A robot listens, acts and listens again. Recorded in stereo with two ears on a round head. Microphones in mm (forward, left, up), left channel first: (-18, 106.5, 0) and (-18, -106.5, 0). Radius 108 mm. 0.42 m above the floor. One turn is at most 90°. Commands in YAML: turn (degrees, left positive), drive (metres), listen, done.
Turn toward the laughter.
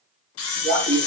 turn: 35
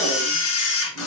listen: true
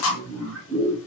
done: "Facing the laughter."